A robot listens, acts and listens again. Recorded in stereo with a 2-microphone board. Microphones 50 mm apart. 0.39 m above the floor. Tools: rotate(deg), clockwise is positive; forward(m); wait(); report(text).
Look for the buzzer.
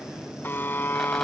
rotate(-45)
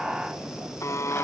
rotate(-90)
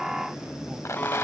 wait()
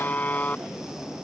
rotate(-35)
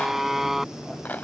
report("Facing the buzzer.")